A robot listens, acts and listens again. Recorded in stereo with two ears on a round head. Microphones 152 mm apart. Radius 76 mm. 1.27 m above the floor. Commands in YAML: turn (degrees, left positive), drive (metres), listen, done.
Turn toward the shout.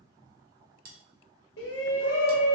turn: 70
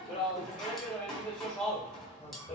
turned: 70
done: "Facing the shout."